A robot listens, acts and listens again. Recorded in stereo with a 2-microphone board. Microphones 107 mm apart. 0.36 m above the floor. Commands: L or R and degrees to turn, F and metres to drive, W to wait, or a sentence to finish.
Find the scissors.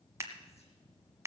R25
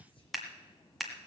Facing the scissors.